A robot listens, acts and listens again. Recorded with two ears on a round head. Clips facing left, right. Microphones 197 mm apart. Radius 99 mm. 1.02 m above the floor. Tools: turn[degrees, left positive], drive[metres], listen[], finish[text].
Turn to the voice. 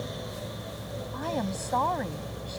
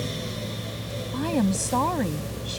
Thought: The woman speaking: about 45° right or 135° right.
Action: turn[-45]
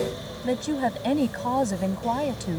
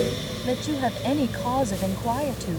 Action: finish[Found it: a woman speaking, straight ahead.]